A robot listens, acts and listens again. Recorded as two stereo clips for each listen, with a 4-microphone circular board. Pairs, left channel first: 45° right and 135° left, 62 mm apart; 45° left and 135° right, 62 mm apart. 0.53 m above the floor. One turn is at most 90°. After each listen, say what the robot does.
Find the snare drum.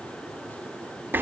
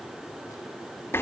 Keep listening.
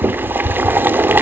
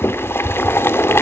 Keep listening.
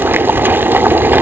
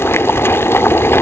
I can't make out a snare drum, only boiling.